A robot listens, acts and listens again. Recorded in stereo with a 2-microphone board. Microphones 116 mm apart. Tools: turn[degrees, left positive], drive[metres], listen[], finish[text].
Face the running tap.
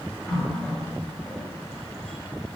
Action: turn[30]
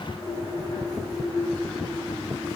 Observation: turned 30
Thought: So it is at 140° left.
Action: turn[140]
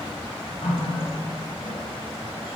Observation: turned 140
Thought: The running tap is now 45° left.
Action: turn[45]
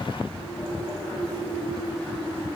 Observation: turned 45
Thought: The running tap is now 10° left.
Action: turn[10]
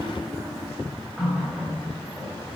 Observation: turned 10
Action: finish[Facing the running tap, over 4 m away.]